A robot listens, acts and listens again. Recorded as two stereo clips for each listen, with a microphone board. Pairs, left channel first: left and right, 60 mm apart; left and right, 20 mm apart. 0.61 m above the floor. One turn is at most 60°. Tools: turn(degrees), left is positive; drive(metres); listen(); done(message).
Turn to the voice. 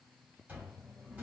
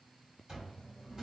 listen()
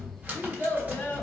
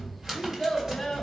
turn(degrees=35)
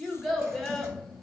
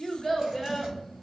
done("Found it: a child speaking, straight ahead.")